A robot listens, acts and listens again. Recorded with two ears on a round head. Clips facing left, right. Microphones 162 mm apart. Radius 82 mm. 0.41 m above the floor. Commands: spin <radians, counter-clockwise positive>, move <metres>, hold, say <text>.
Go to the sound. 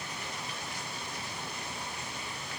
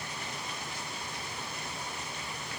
hold
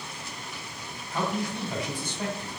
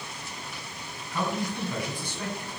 spin 0.35
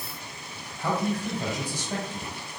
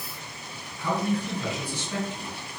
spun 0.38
spin 2.27
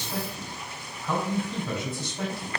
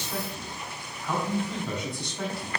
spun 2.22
move 1.0
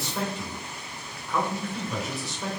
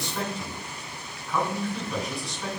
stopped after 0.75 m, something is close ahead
say Arrived at the man speaking, straight ahead.